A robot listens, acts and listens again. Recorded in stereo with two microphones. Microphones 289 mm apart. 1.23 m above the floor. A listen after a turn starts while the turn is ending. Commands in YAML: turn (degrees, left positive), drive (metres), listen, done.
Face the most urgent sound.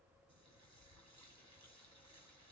listen: true
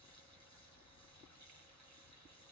listen: true
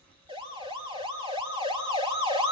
turn: -15
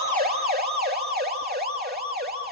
turn: -150
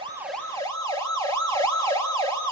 turn: 10
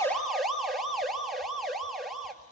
done: "Found it: a siren, straight ahead."